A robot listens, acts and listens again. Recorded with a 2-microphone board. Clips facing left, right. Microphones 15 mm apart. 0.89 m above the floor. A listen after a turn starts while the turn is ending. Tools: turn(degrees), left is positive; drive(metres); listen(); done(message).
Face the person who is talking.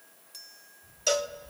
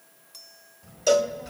turn(degrees=-70)
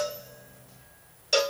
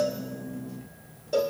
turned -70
done("Facing the child speaking.")